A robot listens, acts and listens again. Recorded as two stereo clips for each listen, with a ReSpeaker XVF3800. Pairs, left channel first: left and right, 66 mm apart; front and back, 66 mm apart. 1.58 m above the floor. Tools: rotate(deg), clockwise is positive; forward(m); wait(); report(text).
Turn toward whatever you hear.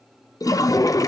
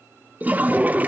rotate(-115)
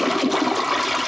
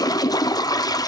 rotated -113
report("Found it: a toilet flushing, straight ahead, under 1 m away.")